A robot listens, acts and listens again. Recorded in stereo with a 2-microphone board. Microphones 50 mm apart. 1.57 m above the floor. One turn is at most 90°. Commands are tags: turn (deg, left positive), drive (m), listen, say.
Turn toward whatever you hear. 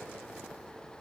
<listen/>
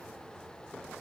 <listen/>
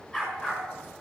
<turn deg="25"/>
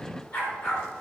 <turn deg="90"/>
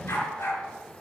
<turn deg="75"/>
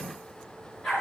<say>Facing the dog barking.</say>